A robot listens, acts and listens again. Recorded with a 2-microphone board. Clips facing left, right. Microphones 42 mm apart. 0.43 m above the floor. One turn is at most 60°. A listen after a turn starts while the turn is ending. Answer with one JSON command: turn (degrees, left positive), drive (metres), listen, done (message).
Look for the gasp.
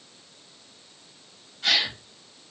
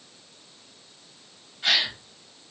{"turn": -15}
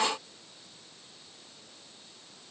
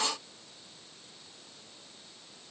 {"listen": true}
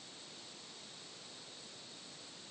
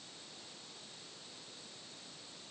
{"done": "I heard a gasp, but can't make it out now. It was about straight ahead or 150° right."}